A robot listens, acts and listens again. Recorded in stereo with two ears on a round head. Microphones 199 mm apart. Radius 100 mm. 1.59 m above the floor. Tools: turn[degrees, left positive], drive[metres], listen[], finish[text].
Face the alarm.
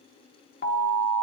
Thought: The alarm: about 45° left or 135° left.
Action: turn[45]
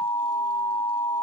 Thought: So it is at 85° left.
Action: turn[85]
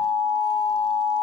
Action: finish[Facing the alarm.]